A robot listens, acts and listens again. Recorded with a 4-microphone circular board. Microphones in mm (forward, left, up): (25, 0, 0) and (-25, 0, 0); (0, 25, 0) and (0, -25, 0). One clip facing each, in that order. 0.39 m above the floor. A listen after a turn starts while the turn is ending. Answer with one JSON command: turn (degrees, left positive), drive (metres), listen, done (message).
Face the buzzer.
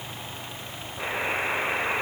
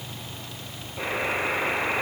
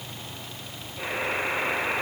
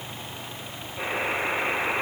{"turn": -160}
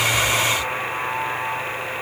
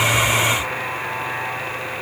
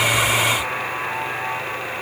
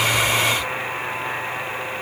{"turn": 10}
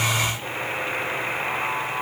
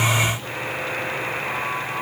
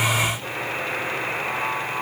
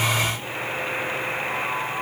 {"done": "Facing the buzzer."}